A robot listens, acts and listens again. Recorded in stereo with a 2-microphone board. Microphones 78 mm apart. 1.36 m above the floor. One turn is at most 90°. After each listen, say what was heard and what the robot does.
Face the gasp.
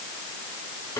Keep listening.
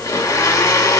Keep listening.
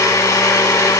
I can't make out a gasp to turn to.